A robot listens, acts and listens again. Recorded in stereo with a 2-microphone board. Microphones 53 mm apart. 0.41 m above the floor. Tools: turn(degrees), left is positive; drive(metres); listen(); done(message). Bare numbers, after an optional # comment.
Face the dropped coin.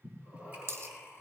# The dropped coin: about 55° right or 125° right.
turn(-55)
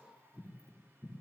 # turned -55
listen()
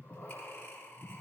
done("I heard a dropped coin, but can't make it out now. It was about straight ahead or 70° right.")